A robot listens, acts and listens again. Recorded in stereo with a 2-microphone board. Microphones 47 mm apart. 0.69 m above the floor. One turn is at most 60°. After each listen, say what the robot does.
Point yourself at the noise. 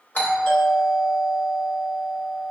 Turn 40° left.
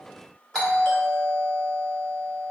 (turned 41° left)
Turn 10° left.
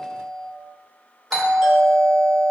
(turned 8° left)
Facing the doorbell, 1 to 2 m away.